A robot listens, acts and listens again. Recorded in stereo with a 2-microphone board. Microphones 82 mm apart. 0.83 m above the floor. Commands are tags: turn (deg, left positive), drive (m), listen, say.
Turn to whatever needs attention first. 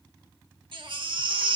<turn deg="-90"/>
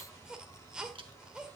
<turn deg="-10"/>
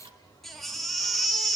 <say>Facing the baby crying, 1 to 2 m away.</say>